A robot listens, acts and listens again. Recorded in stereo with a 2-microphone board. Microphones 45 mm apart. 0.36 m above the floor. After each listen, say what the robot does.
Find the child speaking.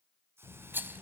Turn 90° left.
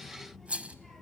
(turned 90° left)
Facing the child speaking, over 4 m away.